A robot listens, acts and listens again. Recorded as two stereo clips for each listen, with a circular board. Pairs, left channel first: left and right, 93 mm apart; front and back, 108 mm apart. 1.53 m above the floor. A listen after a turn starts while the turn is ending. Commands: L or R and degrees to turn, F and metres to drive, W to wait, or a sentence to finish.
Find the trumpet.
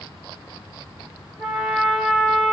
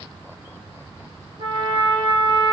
L180
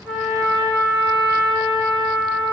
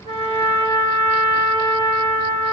R45
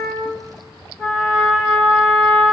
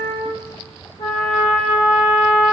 Facing the trumpet, 1 to 2 m away.